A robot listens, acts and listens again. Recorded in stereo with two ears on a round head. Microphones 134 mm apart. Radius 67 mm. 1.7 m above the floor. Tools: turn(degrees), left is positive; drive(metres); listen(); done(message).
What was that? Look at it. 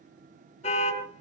turn(degrees=50)
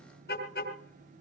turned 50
turn(degrees=80)
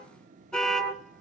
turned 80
done("Facing the car horn, over 4 m away.")